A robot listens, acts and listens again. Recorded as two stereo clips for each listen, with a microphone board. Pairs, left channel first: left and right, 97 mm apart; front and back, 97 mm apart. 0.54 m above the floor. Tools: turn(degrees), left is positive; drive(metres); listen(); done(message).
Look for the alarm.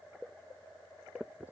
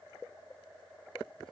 listen()
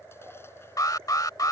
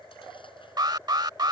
turn(degrees=140)
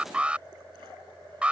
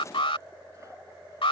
turn(degrees=-10)
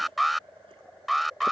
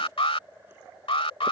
done("Facing the alarm.")